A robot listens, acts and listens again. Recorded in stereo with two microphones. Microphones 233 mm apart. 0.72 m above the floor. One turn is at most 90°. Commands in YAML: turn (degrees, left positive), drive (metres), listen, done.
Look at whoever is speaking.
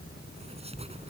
listen: true
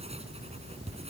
listen: true
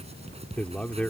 turn: 30
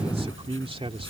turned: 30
turn: -25
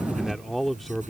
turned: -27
done: "Facing the man speaking."